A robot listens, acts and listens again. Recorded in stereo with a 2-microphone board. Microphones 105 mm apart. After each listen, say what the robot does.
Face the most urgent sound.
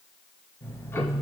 Keep listening.
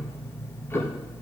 Keep listening.
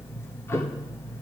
I can't make out anything urgent to turn to.